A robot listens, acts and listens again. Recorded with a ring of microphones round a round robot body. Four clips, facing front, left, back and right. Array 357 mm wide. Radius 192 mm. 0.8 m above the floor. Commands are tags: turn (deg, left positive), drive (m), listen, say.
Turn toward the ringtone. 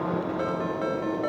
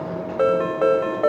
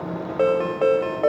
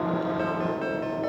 <turn deg="130"/>
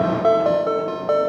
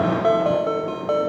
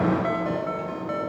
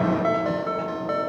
<turn deg="25"/>
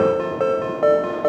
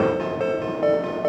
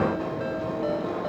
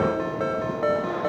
<turn deg="15"/>
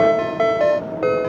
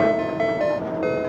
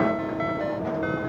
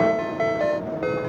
<say>Facing the ringtone.</say>